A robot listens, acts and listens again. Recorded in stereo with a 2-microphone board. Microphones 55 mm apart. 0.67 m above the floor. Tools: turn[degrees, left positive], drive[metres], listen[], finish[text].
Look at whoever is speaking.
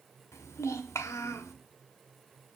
Thought: The child speaking: about 70° left or 110° left.
Action: turn[70]
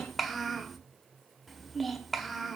Action: finish[Facing the child speaking.]